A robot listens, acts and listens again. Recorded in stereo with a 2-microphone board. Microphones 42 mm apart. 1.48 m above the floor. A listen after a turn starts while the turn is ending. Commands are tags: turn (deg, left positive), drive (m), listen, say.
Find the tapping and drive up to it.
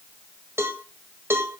<listen/>
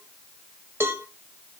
<listen/>
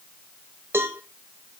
<say>I can't make out tapping to turn to.</say>